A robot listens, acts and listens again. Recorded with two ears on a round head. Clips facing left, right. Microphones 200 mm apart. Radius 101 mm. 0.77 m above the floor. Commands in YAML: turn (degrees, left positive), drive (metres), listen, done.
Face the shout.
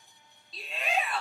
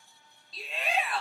turn: 30
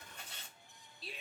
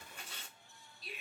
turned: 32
turn: 150
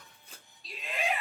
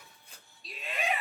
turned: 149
done: "Found it: a shout, straight ahead, under 1 m away."